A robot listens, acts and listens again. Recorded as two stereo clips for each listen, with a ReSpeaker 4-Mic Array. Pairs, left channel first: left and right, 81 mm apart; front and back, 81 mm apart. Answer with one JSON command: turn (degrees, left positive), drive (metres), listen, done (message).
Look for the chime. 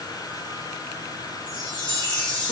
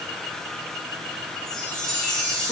{"turn": 85}
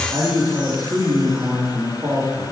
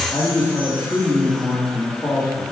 {"listen": true}
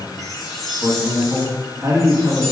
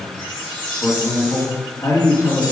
{"done": "Facing the chime."}